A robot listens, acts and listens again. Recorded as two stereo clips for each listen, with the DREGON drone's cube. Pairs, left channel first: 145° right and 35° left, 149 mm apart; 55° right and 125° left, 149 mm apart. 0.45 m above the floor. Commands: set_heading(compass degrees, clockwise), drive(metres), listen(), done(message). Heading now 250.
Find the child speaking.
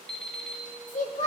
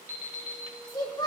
set_heading(5)
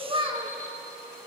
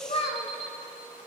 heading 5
set_heading(25)
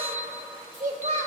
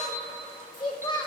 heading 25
done("Found it: a child speaking, straight ahead.")